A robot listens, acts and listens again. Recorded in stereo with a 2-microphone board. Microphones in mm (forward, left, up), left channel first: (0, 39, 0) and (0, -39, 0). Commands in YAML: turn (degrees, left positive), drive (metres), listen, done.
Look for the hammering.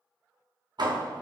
turn: -65
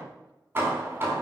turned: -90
turn: -25
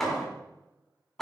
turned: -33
done: "Facing the hammering."